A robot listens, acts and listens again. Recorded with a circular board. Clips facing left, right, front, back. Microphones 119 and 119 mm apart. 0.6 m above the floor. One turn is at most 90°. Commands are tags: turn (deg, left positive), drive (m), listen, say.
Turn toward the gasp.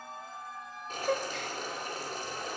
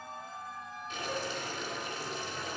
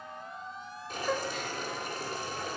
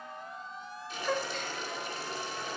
<turn deg="85"/>
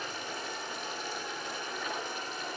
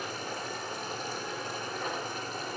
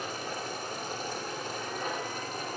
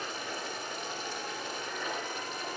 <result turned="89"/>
<say>I heard a gasp from this way, but can't make it out now.</say>